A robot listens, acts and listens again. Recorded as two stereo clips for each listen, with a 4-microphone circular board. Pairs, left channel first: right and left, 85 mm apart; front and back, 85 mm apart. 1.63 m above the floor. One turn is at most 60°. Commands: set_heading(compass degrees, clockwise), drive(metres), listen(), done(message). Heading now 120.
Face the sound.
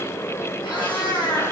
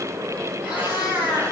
set_heading(180)
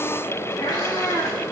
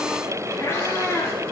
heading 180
set_heading(230)
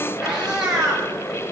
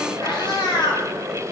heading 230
set_heading(220)
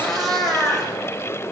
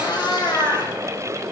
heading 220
done("Facing the cat meowing.")